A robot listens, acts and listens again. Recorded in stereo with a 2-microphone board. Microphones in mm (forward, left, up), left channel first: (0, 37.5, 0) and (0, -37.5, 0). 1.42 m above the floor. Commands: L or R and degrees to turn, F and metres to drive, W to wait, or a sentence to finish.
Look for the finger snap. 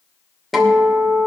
W
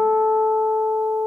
W
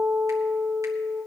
I can't make out a finger snap to turn to.